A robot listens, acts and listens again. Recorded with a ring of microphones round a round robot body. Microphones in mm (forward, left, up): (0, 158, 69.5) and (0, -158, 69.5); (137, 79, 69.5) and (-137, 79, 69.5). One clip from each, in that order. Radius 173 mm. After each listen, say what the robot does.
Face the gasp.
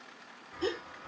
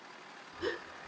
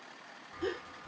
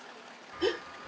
Turn 155° left.
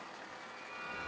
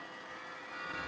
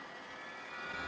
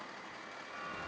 Facing where the gasp came from. I can't hear it now.